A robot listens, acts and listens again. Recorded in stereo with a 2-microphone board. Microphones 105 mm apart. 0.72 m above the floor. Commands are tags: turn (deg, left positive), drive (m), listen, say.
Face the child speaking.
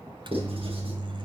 <listen/>
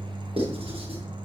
<listen/>
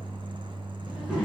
<turn deg="-30"/>
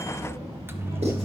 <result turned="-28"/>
<turn deg="-150"/>
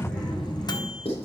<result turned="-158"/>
<say>Found it: a child speaking, straight ahead.</say>